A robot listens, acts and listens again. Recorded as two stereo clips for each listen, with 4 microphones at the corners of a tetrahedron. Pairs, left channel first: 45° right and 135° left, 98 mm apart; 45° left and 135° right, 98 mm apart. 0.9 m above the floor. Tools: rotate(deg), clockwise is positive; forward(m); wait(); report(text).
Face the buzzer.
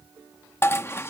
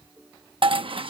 wait()
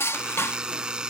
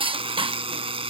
rotate(145)
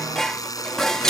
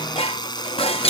report("Facing the buzzer.")